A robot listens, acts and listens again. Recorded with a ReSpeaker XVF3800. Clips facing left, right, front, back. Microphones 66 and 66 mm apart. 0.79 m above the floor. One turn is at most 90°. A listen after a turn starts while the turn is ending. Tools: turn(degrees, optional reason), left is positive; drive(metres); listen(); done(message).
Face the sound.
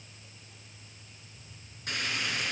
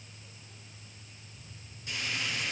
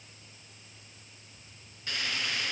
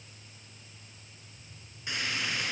turn(degrees=90, reason="The frying: 110° left.")
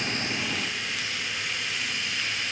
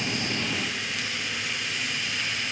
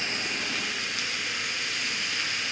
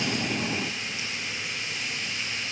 done("Found it: frying, straight ahead, 2 to 4 m away.")